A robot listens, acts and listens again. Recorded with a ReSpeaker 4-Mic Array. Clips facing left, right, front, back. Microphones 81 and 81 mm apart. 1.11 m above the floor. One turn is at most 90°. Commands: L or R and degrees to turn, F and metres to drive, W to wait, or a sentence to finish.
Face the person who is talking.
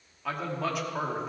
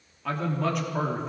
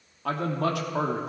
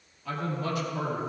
Facing the man speaking, 2 to 4 m away.